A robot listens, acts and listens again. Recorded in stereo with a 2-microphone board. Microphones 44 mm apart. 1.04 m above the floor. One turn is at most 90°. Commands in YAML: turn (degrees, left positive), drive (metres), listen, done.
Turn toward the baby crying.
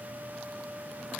listen: true
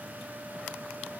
listen: true
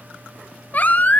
turn: 40
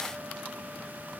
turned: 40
listen: true
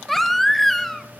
done: "Found it: a baby crying, straight ahead."